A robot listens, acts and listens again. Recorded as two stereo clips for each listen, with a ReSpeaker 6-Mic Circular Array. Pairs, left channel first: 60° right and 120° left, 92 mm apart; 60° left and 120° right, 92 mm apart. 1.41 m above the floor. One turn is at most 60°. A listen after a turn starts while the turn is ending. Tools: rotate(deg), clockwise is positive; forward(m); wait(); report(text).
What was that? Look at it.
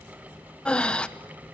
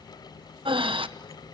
rotate(60)
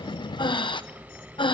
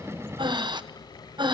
rotate(60)
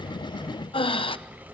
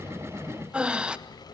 rotate(40)
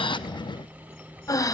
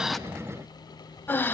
rotate(10)
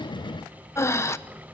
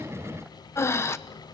report("Found it: breathing, straight ahead, under 1 m away.")